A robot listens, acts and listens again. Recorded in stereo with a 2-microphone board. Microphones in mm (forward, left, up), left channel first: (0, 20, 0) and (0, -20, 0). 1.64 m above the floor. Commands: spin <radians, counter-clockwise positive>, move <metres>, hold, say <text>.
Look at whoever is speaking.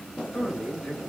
spin 0.52
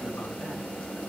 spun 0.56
hold
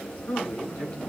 spin 2.09
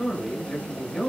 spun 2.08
say Facing the man speaking, over 4 m away.